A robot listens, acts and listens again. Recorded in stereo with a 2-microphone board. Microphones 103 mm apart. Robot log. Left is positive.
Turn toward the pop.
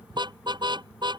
cmd idle
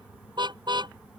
cmd idle
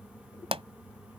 cmd yaw -90
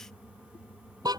end: Facing where the pop came from. I can't hear it now.